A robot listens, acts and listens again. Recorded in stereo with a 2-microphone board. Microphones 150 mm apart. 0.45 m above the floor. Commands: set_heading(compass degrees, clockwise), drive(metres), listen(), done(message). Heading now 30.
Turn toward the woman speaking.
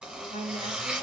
set_heading(65)
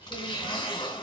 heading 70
listen()
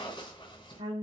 set_heading(105)
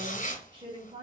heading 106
set_heading(146)
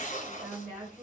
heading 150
set_heading(175)
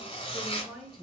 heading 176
done("Found it: a woman speaking, straight ahead, 1 to 2 m away.")